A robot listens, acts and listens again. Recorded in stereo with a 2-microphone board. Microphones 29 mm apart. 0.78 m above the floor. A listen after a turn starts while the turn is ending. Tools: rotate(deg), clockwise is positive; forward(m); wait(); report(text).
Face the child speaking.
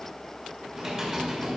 wait()
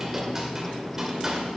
wait()
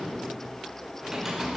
report("I can't make out a child speaking, only typing on a keyboard.")